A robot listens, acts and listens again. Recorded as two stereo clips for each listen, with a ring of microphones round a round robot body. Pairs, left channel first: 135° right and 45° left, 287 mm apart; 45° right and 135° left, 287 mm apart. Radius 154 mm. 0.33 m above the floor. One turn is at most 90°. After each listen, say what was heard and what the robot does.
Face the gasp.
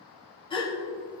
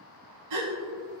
The gasp: 150° left. Turn 90° left.
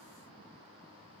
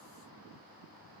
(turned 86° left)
Nothing new. It was at 65° left. Turn 65° left.
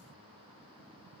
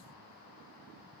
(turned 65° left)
I heard a gasp from this way, but can't make it out now.